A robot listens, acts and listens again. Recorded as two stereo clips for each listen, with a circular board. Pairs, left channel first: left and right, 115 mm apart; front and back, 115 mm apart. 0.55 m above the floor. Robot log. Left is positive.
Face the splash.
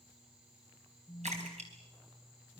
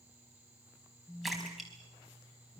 note: The splash: 90° right.
cmd yaw -90
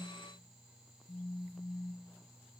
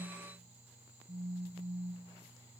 end: Facing where the splash came from. I can't hear it now.